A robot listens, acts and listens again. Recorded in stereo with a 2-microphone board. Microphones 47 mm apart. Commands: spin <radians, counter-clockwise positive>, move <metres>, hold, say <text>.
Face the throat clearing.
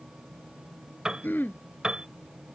spin 0.79
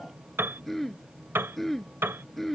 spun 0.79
say Facing the throat clearing.